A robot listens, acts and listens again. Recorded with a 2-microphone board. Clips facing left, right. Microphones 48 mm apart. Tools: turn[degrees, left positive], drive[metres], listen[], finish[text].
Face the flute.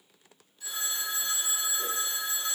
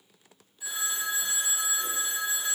Action: listen[]
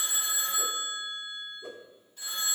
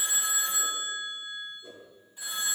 Action: listen[]
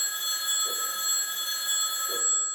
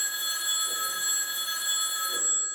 Action: finish[I can't make out a flute, only a whoosh and a phone ringing.]